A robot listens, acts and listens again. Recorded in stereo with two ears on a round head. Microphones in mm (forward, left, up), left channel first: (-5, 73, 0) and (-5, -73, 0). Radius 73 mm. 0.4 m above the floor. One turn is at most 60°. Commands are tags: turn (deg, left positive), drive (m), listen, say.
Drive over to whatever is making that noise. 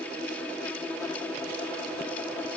<listen/>
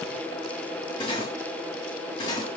<turn deg="30"/>
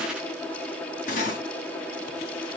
<turn deg="60"/>
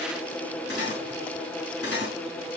<turn deg="60"/>
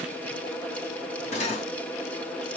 <turn deg="45"/>
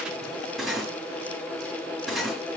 <drive m="1.0"/>
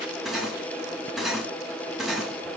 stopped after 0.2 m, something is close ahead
<say>Blocked. The cutlery clinking is further on, straight ahead.</say>